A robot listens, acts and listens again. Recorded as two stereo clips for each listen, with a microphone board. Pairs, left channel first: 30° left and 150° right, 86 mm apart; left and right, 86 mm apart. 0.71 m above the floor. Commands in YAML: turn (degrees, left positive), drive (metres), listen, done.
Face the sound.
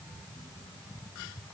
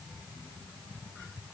listen: true
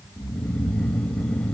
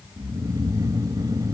turn: -45
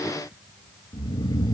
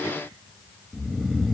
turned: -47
done: "Found it: snoring, straight ahead."